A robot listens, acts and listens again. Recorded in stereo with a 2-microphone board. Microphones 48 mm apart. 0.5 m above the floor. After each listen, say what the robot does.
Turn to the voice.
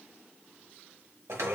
Keep listening.
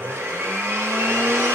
Keep listening.
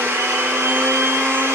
I can't make out anyone speaking, only a blender.